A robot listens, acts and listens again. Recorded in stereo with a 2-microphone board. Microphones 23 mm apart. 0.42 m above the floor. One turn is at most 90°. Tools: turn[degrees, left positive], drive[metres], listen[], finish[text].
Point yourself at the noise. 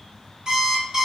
Thought: The alarm clock: about 30° right or 150° right.
Action: turn[-30]
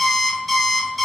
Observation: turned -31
Action: finish[Facing the alarm clock, 1 to 2 m away.]